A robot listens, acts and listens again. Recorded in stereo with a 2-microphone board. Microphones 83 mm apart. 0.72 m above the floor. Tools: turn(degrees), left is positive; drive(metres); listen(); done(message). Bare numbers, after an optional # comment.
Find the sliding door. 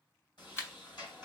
# The sliding door: about 65° left or 115° left.
turn(65)
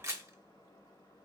# So it is at 45° left.
turn(45)
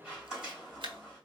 # The sliding door is now 10° right.
turn(-10)
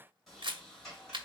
done("Found it: a sliding door, straight ahead.")